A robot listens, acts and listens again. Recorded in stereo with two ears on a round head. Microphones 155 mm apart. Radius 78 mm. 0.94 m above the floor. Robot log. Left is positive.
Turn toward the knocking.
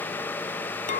cmd idle
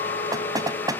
note: The knocking: about 20° right or 160° right.
cmd yaw -20
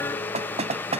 note: So it is at 140° right.
cmd yaw -140
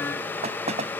note: The knocking is now 40° right.
cmd yaw -40
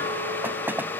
note: The knocking is now 10° right.
cmd yaw -10
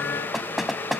end: Found it: knocking, straight ahead.